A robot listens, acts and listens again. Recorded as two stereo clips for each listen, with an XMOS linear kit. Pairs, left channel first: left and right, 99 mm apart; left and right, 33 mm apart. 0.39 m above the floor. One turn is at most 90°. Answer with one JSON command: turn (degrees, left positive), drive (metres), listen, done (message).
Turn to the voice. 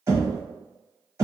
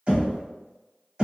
{"listen": true}
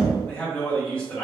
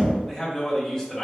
{"turn": 30}
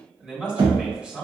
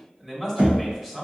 {"turn": -15}
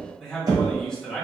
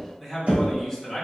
{"done": "Facing the man speaking."}